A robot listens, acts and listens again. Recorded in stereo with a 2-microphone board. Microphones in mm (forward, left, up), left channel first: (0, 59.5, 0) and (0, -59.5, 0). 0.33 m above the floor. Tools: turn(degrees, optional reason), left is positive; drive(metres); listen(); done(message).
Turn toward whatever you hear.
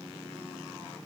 listen()
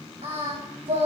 turn(degrees=-60, reason="The singing: about 60° right or 120° right.")
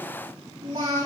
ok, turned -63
turn(degrees=-55, reason="So it is at 55° right.")
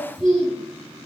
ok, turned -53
done("Found it: singing, straight ahead, over 4 m away.")